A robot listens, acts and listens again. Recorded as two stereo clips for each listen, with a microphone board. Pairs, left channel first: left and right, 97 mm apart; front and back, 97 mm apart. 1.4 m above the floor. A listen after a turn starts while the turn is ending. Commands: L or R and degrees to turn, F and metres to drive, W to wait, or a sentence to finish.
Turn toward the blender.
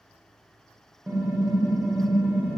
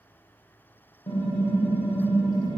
W
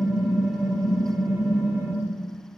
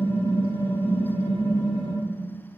W
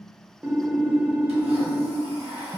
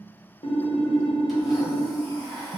R90
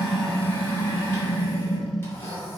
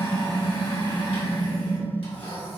L25
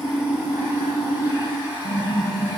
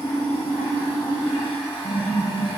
R20
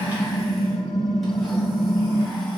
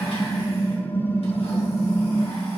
W
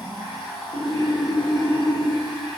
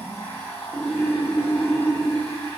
Found it: a blender, straight ahead, 1 to 2 m away.